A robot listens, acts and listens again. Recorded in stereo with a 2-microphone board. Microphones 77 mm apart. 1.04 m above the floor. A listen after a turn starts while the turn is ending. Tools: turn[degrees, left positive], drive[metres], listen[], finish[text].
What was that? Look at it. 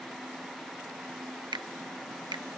Action: turn[-90]
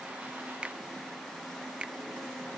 Thought: So it is at 15° right.
Action: turn[-15]
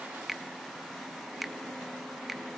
Action: finish[Facing the finger snap.]